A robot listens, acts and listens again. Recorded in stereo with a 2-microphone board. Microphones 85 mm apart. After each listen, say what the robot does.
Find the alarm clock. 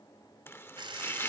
Turn 90° right.
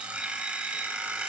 Turn 15° right.
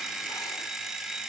Facing the alarm clock, 2 to 4 m away.